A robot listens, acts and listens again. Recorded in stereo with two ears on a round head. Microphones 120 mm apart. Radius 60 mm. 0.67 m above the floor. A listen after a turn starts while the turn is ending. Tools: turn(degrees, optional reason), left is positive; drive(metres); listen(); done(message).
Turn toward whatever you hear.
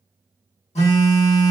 turn(degrees=55, reason="The phone buzzing: about 55° left or 125° left.")
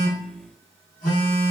turn(degrees=75, reason="So it is at 75° left.")
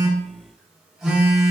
done("Facing the phone buzzing, under 1 m away.")